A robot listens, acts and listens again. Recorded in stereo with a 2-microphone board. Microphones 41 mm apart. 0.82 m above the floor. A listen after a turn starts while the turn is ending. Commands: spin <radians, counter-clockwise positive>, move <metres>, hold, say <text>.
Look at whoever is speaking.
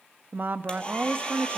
spin -0.87
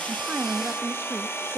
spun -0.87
spin -1.13
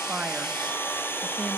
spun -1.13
hold
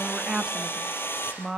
spin -0.35
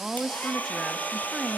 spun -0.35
say Found it: a woman speaking, straight ahead, 1 to 2 m away.